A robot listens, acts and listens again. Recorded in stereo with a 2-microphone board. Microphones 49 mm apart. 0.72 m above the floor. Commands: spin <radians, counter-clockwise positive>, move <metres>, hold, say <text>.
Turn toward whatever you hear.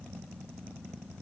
hold
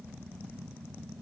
hold
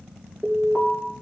spin 0.52
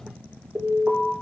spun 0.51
spin -0.44
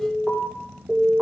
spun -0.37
say Found it: an alarm, straight ahead.